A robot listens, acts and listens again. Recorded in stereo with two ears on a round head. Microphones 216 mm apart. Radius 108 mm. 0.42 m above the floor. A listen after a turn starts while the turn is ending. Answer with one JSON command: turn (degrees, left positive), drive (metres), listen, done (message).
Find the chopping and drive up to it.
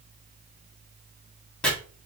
{"turn": 30}
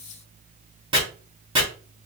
{"turn": -25}
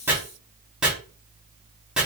{"drive": 1.0}
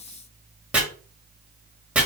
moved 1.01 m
{"drive": 1.0}
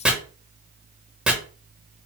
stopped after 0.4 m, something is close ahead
{"done": "I am next to the chopping."}